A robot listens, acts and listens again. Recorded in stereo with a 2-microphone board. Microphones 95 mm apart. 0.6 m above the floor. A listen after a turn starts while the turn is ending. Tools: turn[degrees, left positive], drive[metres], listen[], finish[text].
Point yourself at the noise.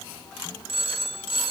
Action: turn[-90]
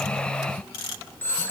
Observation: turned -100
Thought: So it is at 20° left.
Action: turn[20]
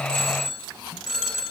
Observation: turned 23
Action: finish[Found it: a phone ringing, straight ahead, 1 to 2 m away.]